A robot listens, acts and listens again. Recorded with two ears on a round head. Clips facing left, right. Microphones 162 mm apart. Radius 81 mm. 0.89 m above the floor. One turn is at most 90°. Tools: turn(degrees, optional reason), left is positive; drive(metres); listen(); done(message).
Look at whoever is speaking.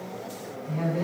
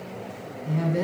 turn(degrees=-70, reason="The woman speaking: about 70° right or 110° right.")
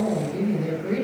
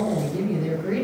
done("Found it: a woman speaking, straight ahead.")